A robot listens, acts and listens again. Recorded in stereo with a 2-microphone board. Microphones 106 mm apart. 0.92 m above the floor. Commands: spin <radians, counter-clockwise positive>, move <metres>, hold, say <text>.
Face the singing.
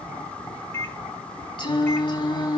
spin 0.79
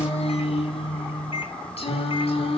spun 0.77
spin 1.31
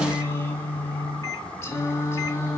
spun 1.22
spin 0.52
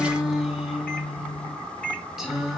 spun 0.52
say Facing the singing, 2 to 4 m away.